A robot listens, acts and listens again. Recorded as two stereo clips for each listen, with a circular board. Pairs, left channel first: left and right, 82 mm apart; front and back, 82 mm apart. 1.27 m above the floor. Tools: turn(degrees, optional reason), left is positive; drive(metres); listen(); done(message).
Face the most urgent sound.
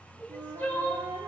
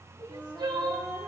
turn(degrees=155, reason="The crying: 155° left.")
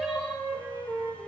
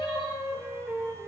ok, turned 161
listen()
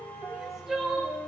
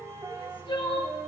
done("Found it: crying, straight ahead.")